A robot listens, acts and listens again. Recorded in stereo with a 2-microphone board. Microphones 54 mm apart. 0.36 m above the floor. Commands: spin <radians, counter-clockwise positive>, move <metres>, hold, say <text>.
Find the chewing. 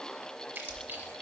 spin -0.70
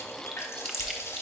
say Found it: chewing, straight ahead.